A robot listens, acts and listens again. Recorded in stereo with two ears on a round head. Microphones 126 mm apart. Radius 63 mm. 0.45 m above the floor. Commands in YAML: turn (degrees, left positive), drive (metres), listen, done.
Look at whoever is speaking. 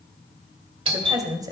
turn: -25
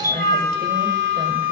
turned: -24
listen: true
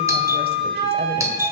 listen: true
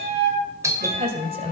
turn: -125
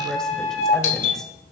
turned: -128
listen: true
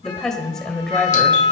done: "Found it: a woman speaking, straight ahead, 2 to 4 m away."